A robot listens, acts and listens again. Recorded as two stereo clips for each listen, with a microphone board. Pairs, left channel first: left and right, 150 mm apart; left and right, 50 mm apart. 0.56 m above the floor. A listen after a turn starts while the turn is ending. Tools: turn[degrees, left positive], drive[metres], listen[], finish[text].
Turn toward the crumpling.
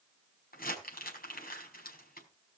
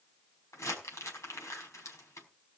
Action: turn[90]
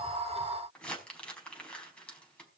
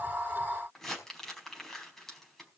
Action: finish[Facing the crumpling.]